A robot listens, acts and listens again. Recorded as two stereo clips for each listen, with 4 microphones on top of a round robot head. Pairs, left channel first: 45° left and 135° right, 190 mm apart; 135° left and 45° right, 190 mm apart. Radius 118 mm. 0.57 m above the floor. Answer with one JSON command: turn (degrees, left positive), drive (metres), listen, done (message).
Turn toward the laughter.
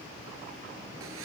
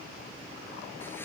{"listen": true}
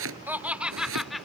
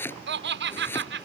{"turn": -45}
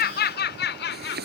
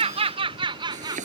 {"turn": 25}
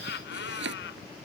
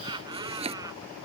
{"turn": 25}
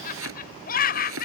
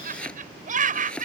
{"done": "Found it: laughter, straight ahead."}